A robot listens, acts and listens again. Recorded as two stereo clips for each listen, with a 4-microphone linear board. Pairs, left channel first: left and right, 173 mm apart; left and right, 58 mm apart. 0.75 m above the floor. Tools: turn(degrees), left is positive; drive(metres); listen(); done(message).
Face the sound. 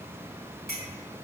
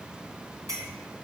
turn(degrees=-70)
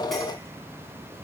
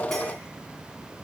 listen()
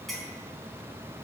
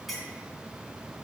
done("Facing the clink.")